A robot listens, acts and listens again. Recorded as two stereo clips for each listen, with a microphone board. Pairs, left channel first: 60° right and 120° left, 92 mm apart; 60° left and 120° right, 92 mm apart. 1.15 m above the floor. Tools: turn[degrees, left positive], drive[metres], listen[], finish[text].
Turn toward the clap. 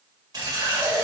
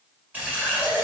Action: listen[]
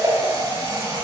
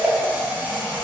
Action: listen[]
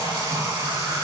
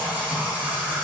Action: finish[I can't make out a clap to turn to.]